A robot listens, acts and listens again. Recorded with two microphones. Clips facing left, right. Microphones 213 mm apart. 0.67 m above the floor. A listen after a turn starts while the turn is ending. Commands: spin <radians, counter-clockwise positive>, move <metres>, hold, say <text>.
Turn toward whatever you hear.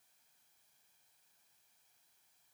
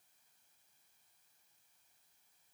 hold
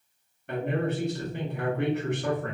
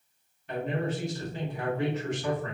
spin 1.05
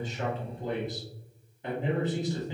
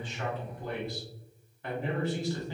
spin 0.35
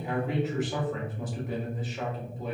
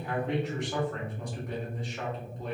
say Found it: a man speaking, straight ahead.